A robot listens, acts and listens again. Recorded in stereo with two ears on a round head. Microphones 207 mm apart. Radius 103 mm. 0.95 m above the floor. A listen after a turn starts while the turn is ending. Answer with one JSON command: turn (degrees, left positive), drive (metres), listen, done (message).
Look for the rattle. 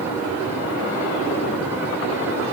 {"listen": true}
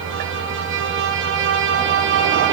{"listen": true}
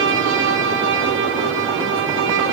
{"done": "I can't make out a rattle, only a violin."}